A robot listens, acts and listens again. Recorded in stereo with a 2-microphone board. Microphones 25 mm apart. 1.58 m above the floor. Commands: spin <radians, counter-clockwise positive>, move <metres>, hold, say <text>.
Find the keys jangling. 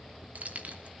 spin -1.22
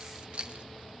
spin -0.79
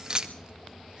spin -0.52
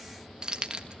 spin -0.61
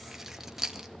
spin -0.26
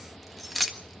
say Found it: keys jangling, straight ahead, 1 to 2 m away.